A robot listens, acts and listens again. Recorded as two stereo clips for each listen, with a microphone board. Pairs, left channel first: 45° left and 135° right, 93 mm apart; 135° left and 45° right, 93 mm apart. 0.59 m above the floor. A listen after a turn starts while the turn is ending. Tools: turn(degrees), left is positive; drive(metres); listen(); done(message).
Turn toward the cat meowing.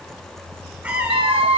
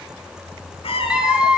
turn(degrees=145)
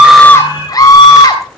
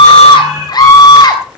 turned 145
listen()
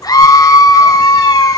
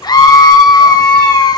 listen()
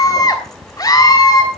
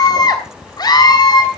done("I heard a cat meowing from this way, but can't make it out now.")